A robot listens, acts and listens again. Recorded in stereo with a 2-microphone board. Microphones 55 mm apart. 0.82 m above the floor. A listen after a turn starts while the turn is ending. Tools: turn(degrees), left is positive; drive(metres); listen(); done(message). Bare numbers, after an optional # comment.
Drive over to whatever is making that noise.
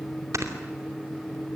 # The snoring: about 70° right or 110° right.
turn(-70)
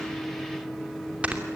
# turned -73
# So it is at 25° right.
turn(-25)
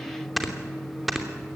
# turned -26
drive(1.0)
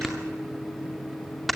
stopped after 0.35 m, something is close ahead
done("Something is in my way. I am facing the snoring but have not reached it.")